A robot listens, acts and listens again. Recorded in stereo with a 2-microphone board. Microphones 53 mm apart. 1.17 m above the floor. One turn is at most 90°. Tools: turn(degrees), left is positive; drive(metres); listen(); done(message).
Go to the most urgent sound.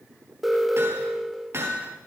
turn(degrees=30)
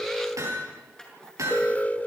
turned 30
turn(degrees=90)
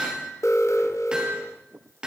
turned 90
turn(degrees=70)
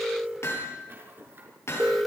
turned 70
drive(metres=1.0)
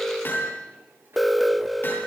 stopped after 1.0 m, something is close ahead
done("Arrived at the alarm, straight ahead.")